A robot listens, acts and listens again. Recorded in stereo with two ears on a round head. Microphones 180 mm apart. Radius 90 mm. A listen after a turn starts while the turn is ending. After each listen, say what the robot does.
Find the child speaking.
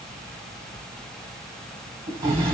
Keep listening.
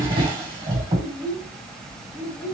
Turn 30° left.
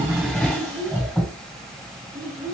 Turn 20° right.
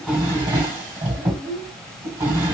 Found it: a child speaking, straight ahead, under 1 m away.